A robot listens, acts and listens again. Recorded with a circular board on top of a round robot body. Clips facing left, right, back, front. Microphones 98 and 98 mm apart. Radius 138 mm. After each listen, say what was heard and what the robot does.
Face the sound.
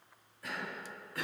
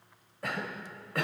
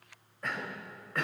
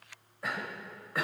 The cough: 80° right. Turn 80° right.
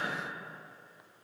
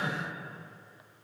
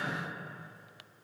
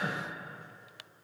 The cough is now 20° right. Turn 20° right.
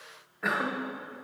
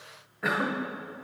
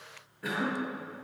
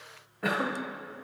Found it: a cough, straight ahead, 1 to 2 m away.